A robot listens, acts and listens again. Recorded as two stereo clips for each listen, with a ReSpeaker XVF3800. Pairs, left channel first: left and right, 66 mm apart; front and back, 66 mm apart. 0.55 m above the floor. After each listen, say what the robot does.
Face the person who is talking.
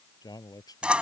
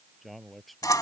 Turn 90° left.
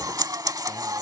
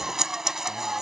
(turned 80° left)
Turn 10° left.
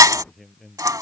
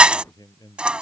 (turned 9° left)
Facing the man speaking.